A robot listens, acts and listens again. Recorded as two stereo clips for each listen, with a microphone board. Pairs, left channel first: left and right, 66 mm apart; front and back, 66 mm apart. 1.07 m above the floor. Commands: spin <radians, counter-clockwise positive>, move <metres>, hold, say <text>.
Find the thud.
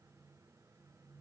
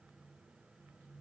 hold
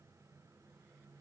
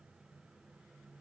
hold
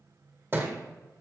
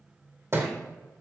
spin -2.44
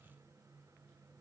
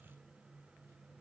say Facing where the thud came from. I can't hear it now.